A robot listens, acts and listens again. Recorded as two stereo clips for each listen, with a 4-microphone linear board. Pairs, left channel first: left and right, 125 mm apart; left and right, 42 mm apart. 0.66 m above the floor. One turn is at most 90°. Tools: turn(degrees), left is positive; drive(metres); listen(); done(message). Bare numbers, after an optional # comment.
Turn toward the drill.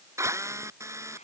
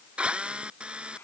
# The drill: about 25° right or 155° right.
turn(-25)
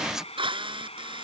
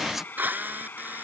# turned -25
# So it is at 135° right.
turn(-90)
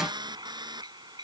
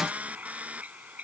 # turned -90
# The drill is now 40° right.
turn(-40)
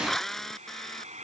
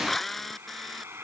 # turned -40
done("Facing the drill.")